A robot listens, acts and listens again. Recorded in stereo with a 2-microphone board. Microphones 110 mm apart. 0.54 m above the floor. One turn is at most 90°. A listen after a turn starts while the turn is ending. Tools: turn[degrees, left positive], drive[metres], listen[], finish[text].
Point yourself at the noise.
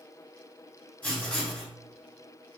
Thought: The writing: about 15° left or 165° left.
Action: turn[15]
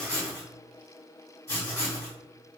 Thought: So it is at 150° left.
Action: turn[90]
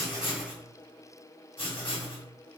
Thought: The writing is now 75° left.
Action: turn[75]
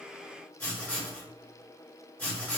Thought: The writing is now 10° left.
Action: turn[10]
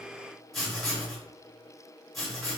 Action: finish[Found it: writing, straight ahead, 1 to 2 m away.]